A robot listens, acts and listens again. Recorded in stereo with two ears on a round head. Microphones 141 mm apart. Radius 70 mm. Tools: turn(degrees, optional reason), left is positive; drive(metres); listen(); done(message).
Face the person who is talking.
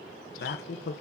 turn(degrees=70, reason="The man speaking: about 70° left or 110° left.")
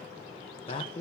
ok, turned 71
turn(degrees=35, reason="So it is at 35° left.")
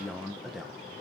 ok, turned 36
done("Found it: a man speaking, straight ahead.")